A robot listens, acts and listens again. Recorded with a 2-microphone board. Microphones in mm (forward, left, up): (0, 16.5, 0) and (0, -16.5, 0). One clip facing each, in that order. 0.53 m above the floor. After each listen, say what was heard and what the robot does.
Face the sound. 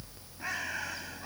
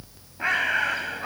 The bird: about 60° right or 120° right. Turn 60° right.
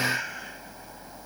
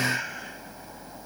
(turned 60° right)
Facing the bird.